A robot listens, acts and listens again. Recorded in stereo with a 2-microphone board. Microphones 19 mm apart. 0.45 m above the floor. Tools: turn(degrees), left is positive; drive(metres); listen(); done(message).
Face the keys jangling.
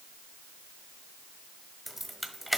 turn(degrees=-30)
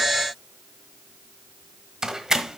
turn(degrees=-145)
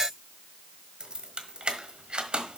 turn(degrees=-60)
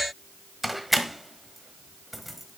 done("Found it: keys jangling, straight ahead, 1 to 2 m away.")